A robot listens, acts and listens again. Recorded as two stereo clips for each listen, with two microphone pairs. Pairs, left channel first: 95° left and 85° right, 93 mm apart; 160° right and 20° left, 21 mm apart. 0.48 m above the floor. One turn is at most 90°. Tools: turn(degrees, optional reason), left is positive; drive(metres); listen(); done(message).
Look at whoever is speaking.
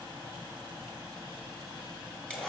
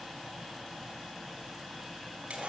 listen()
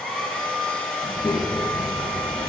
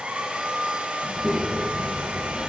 turn(degrees=90, reason="The child speaking: 125° left.")
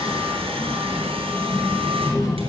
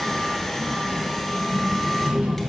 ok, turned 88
turn(degrees=40, reason="The child speaking is now 40° left.")
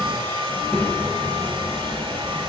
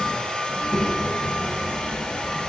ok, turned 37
done("Found it: a child speaking, straight ahead, 2 to 4 m away.")